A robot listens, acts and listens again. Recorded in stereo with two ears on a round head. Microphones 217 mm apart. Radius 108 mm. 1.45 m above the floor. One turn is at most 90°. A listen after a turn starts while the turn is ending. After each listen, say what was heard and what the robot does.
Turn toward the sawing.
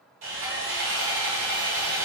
The sawing: about 60° right or 120° right. Turn 60° right.
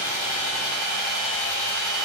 Found it: sawing, straight ahead.